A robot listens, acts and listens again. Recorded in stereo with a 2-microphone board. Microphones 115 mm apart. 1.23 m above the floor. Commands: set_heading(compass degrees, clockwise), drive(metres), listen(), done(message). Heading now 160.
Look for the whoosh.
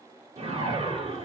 set_heading(220)
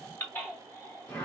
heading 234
set_heading(224)
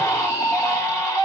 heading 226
listen()
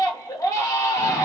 listen()
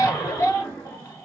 done("Facing the whoosh.")